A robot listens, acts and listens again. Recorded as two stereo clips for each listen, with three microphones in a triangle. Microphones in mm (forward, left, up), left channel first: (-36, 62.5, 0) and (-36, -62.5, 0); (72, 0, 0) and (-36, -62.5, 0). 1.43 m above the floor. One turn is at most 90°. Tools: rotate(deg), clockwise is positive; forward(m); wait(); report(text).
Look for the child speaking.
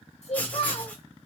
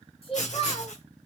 rotate(-70)
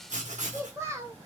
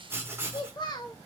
rotate(25)
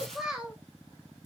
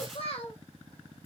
report("Facing the child speaking, under 1 m away.")